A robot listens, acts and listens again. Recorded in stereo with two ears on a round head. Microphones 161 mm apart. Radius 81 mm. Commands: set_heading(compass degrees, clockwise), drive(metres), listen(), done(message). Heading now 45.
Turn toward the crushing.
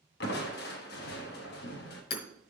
set_heading(345)
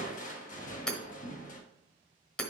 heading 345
set_heading(295)
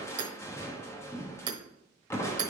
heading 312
set_heading(297)
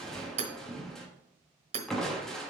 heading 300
done("Facing the crushing, 1 to 2 m away.")